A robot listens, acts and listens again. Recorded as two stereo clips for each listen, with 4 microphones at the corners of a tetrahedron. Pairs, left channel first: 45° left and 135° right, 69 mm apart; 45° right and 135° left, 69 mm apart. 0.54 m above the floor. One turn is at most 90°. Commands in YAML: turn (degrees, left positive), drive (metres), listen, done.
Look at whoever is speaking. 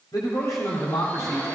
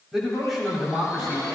turn: 50
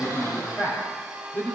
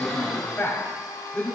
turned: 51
done: "Found it: a man speaking, straight ahead, 2 to 4 m away."